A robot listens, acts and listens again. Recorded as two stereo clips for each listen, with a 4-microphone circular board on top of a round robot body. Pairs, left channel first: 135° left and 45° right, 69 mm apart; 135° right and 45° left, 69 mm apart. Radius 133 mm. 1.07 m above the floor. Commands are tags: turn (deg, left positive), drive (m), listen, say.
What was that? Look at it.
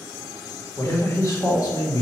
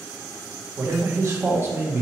<turn deg="105"/>
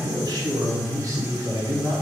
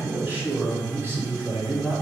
<say>Found it: a man speaking, straight ahead.</say>